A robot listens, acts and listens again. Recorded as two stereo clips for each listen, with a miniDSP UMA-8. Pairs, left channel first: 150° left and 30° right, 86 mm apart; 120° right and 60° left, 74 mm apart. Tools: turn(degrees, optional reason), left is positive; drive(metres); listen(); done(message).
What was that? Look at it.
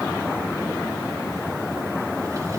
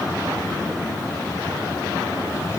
listen()
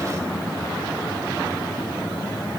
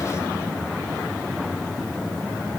listen()
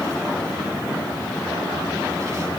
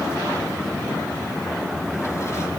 done("I can't make out anything.")